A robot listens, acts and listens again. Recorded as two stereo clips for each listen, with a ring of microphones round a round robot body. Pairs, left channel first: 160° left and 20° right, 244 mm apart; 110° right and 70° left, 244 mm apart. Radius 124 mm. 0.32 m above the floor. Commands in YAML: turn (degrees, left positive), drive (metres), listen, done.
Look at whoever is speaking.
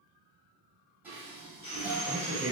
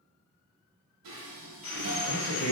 turn: -95
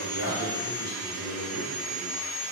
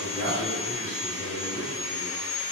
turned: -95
done: "Facing the man speaking, 1 to 2 m away."